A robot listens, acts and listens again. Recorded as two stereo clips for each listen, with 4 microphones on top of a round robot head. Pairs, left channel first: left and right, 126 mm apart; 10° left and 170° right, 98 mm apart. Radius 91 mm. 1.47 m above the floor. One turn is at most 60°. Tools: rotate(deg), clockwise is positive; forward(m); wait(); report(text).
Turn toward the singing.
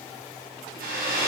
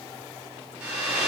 wait()
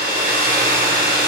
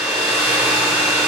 wait()
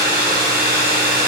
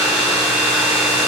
report("I can't make out singing, only a hair dryer.")